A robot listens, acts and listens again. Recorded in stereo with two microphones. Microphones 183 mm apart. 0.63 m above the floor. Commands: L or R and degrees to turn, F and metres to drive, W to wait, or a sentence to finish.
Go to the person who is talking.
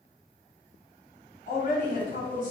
L45
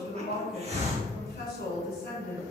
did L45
L80
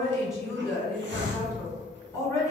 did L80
L15
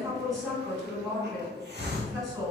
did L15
F1.0
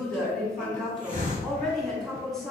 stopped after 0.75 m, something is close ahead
Arrived at the woman speaking, straight ahead.